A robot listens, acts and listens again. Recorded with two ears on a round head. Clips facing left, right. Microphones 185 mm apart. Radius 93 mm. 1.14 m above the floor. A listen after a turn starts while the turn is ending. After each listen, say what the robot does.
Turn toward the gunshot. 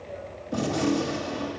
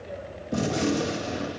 Turn 20° right.
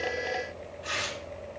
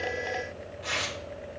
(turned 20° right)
Keep listening.
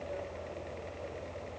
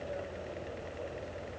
I heard a gunshot, but can't make it out now. It was about straight ahead or 140° right.